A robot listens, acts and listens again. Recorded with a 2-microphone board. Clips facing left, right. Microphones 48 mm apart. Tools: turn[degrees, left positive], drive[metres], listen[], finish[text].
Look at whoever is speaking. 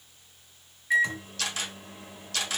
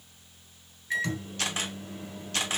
Action: listen[]
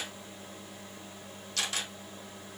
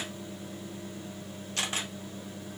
Action: listen[]
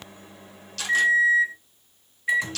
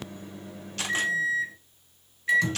Action: finish[I can't make out anyone speaking, only a camera shutter and a microwave.]